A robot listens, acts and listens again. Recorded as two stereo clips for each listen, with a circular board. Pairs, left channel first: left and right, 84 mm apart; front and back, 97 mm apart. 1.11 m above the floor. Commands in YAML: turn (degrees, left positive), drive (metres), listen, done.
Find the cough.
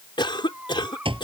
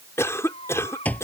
turn: 65
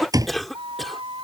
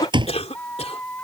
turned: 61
done: "Facing the cough."